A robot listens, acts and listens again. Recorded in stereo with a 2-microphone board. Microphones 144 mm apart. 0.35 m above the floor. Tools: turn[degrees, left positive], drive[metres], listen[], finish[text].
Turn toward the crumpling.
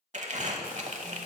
Thought: The crumpling: about 55° right or 125° right.
Action: turn[-55]
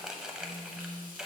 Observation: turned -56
Action: finish[Found it: crumpling, straight ahead, under 1 m away.]